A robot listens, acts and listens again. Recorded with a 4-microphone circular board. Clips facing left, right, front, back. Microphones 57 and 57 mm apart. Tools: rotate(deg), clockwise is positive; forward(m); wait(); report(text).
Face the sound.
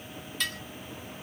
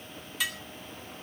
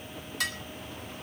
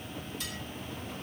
rotate(10)
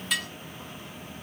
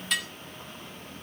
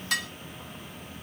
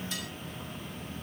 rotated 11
report("Found it: dishes clattering, straight ahead, 2 to 4 m away.")